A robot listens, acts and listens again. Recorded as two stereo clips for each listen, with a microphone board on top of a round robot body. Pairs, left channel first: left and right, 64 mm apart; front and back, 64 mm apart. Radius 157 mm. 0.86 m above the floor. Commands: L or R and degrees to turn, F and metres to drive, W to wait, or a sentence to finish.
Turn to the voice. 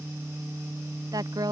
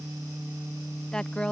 R80
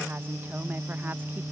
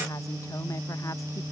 W
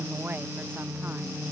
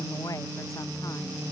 R30
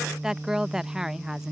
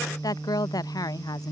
Facing the woman speaking.